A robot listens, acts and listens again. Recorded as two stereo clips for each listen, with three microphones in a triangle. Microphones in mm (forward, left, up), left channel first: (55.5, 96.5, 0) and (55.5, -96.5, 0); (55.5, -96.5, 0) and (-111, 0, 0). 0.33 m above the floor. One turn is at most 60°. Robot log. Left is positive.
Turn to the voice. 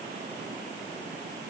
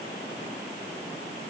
cmd idle
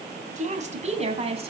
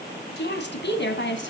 note: The woman speaking: 35° right.
cmd yaw -35
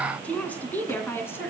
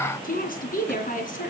note: The woman speaking is now 10° left.
cmd yaw +10
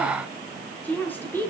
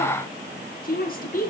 note: The woman speaking is now 10° left.
cmd yaw +10
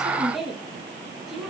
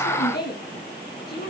end: Facing the woman speaking, over 4 m away.